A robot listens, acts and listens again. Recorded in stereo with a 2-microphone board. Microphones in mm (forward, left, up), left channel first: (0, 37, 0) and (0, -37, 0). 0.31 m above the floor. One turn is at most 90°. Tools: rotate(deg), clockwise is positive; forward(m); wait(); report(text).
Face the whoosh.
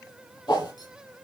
rotate(-90)
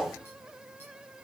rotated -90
report("Facing the whoosh, over 4 m away.")